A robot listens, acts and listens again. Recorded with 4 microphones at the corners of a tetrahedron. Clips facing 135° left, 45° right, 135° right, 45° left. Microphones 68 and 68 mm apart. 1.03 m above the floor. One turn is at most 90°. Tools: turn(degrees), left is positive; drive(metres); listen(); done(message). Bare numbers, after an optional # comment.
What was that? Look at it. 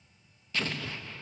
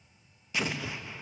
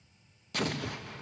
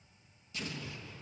# The explosion: 120° right.
turn(-90)
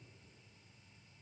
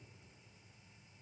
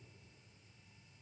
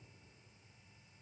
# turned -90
# Nothing new. It was at 30° right.
turn(-30)
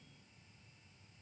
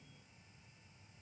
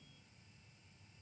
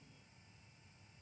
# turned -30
done("Facing where the explosion came from. I can't hear it now.")